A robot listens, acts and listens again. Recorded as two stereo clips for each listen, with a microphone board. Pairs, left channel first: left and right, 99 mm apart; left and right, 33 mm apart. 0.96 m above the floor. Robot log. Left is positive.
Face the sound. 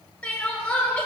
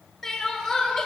cmd yaw +30
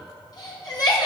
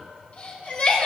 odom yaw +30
note: So it is at 135° left.
cmd yaw +135
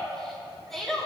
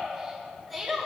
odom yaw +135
end: Facing the crying, 2 to 4 m away.